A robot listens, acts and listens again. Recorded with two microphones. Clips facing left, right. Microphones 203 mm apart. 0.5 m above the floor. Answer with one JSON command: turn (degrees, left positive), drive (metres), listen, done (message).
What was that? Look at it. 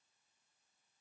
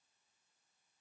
{"listen": true}
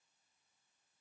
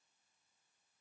{"listen": true}
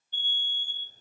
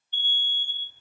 {"turn": 40}
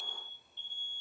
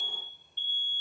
{"done": "Found it: an alarm, straight ahead."}